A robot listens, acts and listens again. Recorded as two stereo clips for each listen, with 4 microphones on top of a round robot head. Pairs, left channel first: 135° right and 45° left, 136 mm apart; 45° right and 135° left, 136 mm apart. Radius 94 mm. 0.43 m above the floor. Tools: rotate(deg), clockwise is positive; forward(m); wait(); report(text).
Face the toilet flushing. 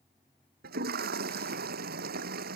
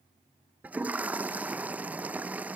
rotate(-55)
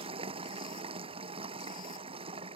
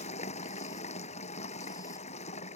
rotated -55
report("Facing the toilet flushing.")